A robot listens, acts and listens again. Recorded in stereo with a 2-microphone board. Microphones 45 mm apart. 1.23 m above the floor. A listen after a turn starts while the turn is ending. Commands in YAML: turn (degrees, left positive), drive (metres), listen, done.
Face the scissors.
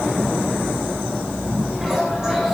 listen: true
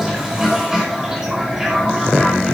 listen: true
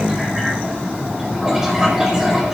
done: "I can't make out scissors to turn to."